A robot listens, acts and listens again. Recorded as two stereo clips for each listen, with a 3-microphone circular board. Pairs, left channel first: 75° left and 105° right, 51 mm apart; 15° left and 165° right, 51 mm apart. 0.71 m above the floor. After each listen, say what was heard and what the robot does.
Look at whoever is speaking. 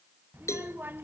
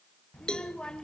The child speaking: 60° right. Turn 60° right.
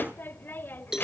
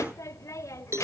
The child speaking is now 25° left. Turn 25° left.
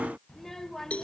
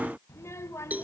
The child speaking is now 10° right. Turn 10° right.
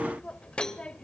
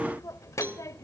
Facing the child speaking.